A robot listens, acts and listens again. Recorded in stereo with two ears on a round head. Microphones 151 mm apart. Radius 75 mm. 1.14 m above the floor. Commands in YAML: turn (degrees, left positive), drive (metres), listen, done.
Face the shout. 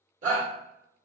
turn: -45
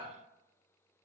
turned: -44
listen: true
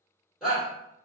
done: "Facing the shout."